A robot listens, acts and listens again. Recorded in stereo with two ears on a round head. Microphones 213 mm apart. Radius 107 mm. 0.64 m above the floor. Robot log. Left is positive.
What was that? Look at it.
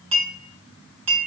cmd yaw -90
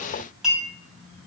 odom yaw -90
end: Found it: a clink, straight ahead, 2 to 4 m away.